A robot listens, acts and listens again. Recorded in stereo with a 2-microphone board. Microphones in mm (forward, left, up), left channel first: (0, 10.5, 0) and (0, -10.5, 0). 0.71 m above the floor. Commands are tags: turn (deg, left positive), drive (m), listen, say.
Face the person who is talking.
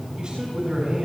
<turn deg="-40"/>
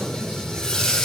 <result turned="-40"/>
<listen/>
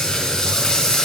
<listen/>
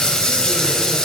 <say>I heard a man speaking, but can't make it out now. It was about straight ahead or 100° right.</say>